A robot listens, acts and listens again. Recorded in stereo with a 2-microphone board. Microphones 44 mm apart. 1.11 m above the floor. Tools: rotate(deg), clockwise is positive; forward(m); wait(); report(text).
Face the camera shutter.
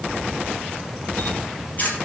rotate(-40)
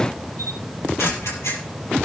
rotate(-100)
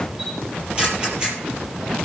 rotate(25)
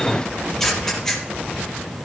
rotate(-10)
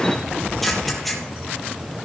report("Facing the camera shutter, over 4 m away.")